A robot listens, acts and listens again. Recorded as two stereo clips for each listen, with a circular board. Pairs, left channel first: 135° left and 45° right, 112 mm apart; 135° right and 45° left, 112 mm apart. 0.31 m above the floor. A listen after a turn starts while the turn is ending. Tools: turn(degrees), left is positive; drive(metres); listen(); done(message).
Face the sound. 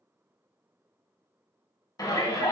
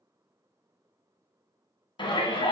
turn(degrees=-170)
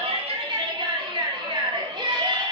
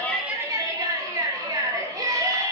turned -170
done("Found it: a shout, straight ahead.")